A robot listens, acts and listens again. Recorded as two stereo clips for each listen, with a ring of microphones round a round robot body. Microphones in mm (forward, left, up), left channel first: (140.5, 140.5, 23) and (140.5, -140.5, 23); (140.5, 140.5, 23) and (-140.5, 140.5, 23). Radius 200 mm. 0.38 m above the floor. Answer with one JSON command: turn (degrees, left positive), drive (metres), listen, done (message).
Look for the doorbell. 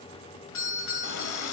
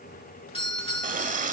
{"turn": 70}
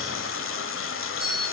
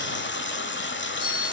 {"done": "Found it: a doorbell, straight ahead."}